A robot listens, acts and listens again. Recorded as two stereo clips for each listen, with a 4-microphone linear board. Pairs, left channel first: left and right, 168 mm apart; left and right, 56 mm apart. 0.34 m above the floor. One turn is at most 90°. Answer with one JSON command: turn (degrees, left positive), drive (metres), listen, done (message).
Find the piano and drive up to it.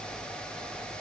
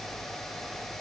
{"listen": true}
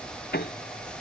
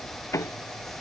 {"turn": 70}
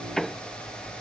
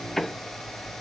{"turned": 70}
{"drive": 1.0}
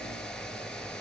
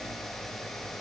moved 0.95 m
{"listen": true}
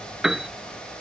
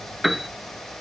{"drive": 1.0}
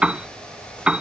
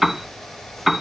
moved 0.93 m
{"drive": 1.0}
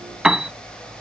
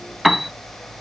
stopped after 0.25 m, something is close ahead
{"done": "Arrived at the piano, straight ahead."}